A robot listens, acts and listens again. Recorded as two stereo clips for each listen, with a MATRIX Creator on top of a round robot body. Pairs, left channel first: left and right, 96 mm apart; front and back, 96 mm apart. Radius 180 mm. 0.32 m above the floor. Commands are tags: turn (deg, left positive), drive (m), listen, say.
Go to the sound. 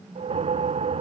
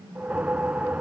<turn deg="-105"/>
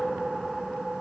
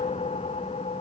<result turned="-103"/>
<drive m="1.0"/>
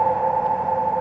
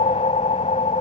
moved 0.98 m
<drive m="1.0"/>
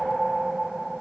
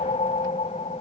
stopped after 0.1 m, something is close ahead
<say>Arrived at the whoosh, straight ahead.</say>